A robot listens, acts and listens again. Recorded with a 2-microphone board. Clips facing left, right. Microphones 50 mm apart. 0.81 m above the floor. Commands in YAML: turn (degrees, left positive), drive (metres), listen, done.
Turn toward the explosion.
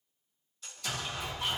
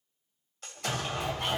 turn: -50
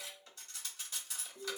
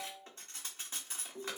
listen: true
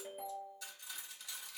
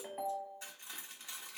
done: "I heard an explosion, but can't make it out now. It was about straight ahead or 80° right."